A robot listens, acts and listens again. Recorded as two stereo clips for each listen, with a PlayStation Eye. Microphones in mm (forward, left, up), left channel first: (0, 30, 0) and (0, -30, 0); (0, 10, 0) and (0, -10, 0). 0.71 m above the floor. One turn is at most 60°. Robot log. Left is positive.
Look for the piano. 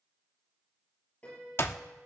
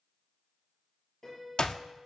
note: The piano: about 25° left or 155° left.
cmd yaw +25
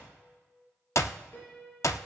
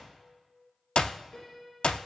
note: So it is at 135° left.
cmd yaw +60
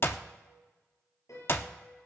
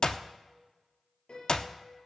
note: The piano is now 80° left.
cmd yaw +60
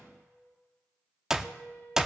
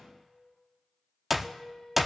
note: The piano is now 20° left.
cmd yaw +20
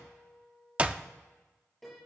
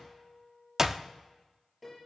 end: Found it: a piano, straight ahead, over 4 m away.